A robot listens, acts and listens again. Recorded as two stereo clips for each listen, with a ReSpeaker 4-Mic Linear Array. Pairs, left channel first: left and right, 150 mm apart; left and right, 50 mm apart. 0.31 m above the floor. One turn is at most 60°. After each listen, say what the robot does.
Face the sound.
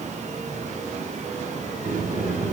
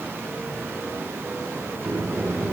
Turn 60° right.
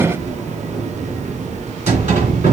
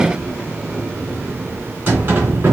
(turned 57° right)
Turn 55° right.
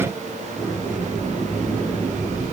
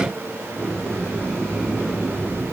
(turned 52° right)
Facing the sliding door, 2 to 4 m away.